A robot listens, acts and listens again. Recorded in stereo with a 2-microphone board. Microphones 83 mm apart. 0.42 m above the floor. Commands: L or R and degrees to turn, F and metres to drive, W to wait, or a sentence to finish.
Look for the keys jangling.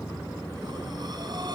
W
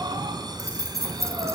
R35
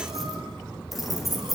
Facing the keys jangling.